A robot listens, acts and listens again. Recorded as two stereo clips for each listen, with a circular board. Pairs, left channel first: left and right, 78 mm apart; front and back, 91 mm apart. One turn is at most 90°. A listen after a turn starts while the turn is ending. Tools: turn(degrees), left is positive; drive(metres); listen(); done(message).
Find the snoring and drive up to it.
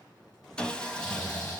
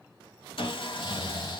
turn(degrees=50)
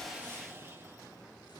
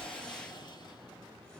listen()
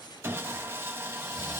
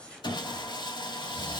listen()
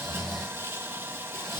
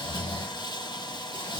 drive(metres=1.0)
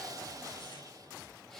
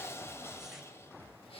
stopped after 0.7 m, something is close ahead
listen()
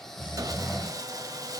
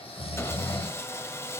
done("Something is in my way. I am facing the snoring but have not reached it.")